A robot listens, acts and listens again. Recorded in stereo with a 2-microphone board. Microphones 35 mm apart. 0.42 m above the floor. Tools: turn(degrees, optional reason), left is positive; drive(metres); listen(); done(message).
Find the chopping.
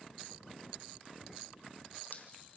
listen()
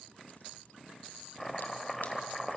turn(degrees=30)
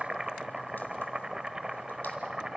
turn(degrees=-20, reason="So it is at 20° right.")
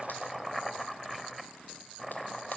done("Found it: chopping, straight ahead.")